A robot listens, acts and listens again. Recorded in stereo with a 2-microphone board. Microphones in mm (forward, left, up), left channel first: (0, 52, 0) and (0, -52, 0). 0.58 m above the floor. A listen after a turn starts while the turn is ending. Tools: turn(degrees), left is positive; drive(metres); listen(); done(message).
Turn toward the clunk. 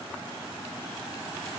listen()
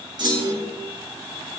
turn(degrees=-45)
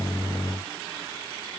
listen()
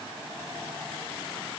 done("I heard a clunk, but can't make it out now. It was about straight ahead or 90° right.")